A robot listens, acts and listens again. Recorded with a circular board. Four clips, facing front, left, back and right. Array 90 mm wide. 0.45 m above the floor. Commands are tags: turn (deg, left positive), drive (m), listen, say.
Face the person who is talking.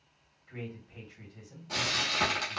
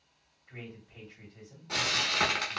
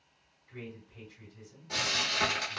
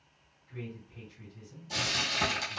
<turn deg="40"/>
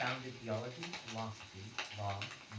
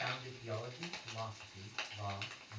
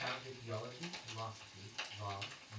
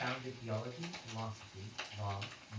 <say>Found it: a man speaking, straight ahead, 1 to 2 m away.</say>